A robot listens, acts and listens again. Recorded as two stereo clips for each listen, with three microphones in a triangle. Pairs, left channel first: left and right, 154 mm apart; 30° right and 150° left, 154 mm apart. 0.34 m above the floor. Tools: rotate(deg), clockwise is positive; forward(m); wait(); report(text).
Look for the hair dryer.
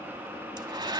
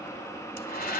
rotate(30)
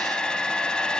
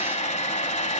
report("Facing the hair dryer, 1 to 2 m away.")